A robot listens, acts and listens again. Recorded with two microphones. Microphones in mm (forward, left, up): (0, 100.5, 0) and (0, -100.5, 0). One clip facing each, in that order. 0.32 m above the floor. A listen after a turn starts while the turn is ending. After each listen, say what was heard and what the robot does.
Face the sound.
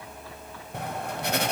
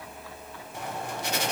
The writing: about 60° left or 120° left. Turn 60° left.
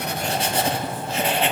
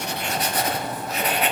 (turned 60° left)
So it is at 35° left. Turn 35° left.
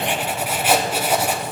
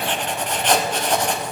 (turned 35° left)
The writing is now 10° left. Turn 10° left.
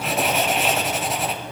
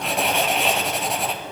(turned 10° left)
Facing the writing.